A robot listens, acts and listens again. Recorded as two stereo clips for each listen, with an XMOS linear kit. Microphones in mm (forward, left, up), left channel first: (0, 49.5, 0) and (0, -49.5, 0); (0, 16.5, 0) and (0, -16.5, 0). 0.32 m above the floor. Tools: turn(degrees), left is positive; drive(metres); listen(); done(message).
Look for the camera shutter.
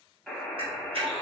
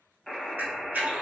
turn(degrees=-90)
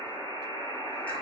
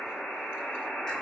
listen()
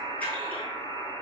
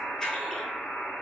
turn(degrees=15)
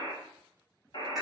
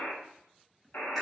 listen()
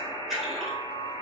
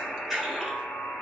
done("Found it: a camera shutter, straight ahead.")